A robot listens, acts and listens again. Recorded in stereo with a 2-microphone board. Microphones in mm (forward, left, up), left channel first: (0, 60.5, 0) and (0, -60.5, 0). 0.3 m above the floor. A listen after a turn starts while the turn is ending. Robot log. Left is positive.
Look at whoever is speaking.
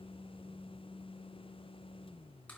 cmd idle
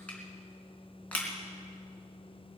cmd idle
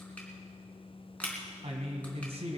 note: The man speaking: about 55° right or 125° right.
cmd yaw -55
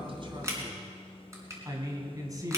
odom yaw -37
note: So it is at 35° right.
cmd yaw -35
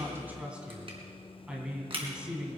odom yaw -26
note: The man speaking is now 10° right.
cmd yaw -10
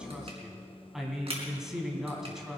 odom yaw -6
end: Facing the man speaking.